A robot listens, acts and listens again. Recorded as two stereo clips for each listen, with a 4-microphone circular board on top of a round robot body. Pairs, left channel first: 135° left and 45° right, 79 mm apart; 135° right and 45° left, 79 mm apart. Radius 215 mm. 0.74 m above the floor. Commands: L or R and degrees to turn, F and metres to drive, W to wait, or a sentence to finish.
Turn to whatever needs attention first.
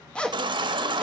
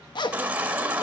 R25
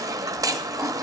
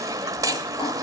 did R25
Facing the baby crying.